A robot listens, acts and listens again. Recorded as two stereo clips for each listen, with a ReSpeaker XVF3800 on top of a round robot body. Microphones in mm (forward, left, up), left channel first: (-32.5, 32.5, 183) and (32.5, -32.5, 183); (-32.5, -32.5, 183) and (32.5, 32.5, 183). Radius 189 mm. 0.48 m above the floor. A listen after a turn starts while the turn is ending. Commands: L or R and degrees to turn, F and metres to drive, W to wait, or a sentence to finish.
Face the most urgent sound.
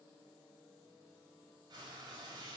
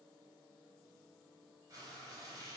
W
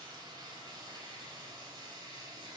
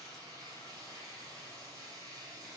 W
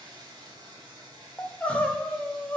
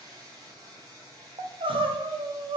L60
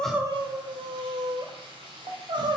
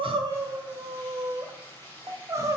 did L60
R10
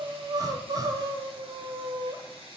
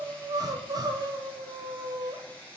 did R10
Facing the crying.